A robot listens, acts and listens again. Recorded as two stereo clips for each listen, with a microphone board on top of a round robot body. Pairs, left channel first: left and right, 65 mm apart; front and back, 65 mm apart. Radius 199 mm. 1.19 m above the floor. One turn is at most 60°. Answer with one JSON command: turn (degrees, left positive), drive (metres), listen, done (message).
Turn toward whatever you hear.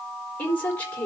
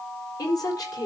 {"turn": 25}
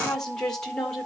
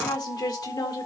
{"turn": 10}
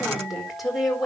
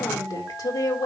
{"done": "Found it: a woman speaking, straight ahead, over 4 m away."}